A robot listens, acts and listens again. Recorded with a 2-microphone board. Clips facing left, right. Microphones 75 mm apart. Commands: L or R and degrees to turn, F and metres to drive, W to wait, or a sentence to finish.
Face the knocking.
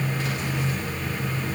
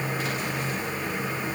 W
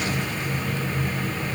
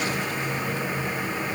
W
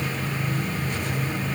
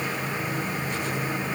I can't make out knocking.